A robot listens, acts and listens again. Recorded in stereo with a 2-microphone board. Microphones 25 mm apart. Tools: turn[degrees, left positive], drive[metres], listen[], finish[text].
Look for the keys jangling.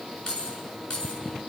Thought: The keys jangling: about 25° left or 155° left.
Action: turn[25]
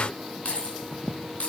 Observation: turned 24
Thought: So it is at 125° left.
Action: turn[125]
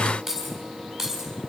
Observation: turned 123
Action: finish[Facing the keys jangling, over 4 m away.]